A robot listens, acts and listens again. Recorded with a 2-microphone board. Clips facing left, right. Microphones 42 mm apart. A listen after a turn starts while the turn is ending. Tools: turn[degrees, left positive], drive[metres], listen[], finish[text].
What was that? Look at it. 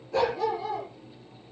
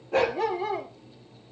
Thought: The dog barking: about 40° right or 140° right.
Action: turn[-40]
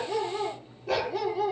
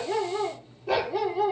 Action: finish[Found it: a dog barking, straight ahead.]